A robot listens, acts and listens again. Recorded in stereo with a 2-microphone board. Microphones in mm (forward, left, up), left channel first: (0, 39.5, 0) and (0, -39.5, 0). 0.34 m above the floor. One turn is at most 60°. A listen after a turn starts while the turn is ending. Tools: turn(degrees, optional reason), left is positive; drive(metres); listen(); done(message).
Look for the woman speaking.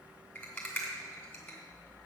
listen()
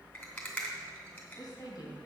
turn(degrees=55, reason="The woman speaking: about 55° left or 125° left.")
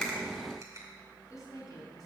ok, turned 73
turn(degrees=50, reason="So it is at 50° left.")
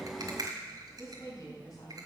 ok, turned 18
turn(degrees=45, reason="The woman speaking is now 45° left.")
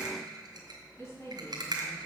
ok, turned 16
turn(degrees=35, reason="The woman speaking is now 35° left.")
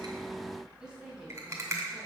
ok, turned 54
turn(degrees=-20, reason="Nothing new. It was at 20° right.")
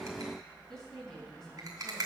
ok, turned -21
done("Found it: a woman speaking, straight ahead.")